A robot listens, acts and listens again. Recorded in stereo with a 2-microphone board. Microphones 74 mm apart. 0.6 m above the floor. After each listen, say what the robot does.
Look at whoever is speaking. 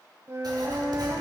Keep listening.
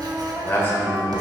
Turn 30° left.
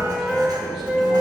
Keep listening.
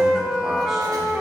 Keep listening.
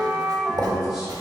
Turn 10° right.
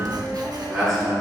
Facing the man speaking, over 4 m away.